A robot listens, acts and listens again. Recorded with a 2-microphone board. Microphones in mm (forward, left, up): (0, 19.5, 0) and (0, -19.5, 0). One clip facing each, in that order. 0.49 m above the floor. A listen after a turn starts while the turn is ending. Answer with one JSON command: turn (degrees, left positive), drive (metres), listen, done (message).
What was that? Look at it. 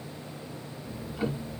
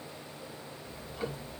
{"turn": 30}
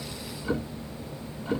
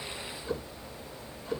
{"turn": 145}
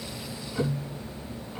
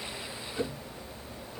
{"turn": 35}
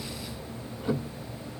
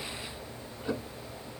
{"turn": 15}
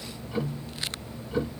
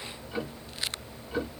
{"done": "Facing the ticking, 1 to 2 m away."}